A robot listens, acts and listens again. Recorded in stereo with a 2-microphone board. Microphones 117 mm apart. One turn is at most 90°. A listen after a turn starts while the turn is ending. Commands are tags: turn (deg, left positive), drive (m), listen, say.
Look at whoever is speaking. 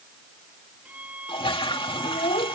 <turn deg="90"/>
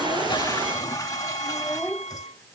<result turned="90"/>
<turn deg="15"/>
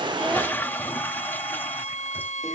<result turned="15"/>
<listen/>
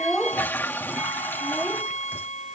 <say>Facing the child speaking.</say>